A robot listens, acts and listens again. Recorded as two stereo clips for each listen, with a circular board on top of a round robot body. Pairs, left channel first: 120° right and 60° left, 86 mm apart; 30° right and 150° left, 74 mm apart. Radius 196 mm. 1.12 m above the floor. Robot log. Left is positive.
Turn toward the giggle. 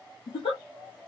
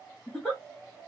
note: The giggle: 110° right.
cmd yaw -110
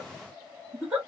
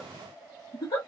note: The giggle is now 10° right.
cmd yaw -10
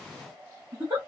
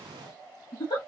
end: Facing the giggle, under 1 m away.